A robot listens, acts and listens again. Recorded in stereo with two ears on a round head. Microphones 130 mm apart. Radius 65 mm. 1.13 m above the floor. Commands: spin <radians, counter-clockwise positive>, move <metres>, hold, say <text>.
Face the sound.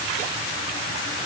hold
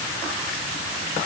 hold
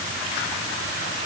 say I can't make out anything to turn to.